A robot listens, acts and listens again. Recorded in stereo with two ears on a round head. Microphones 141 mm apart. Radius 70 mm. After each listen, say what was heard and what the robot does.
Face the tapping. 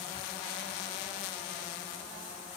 Keep listening.
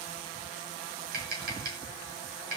The tapping: about 60° right or 120° right. Turn 60° right.
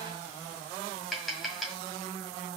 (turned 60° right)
Facing the tapping.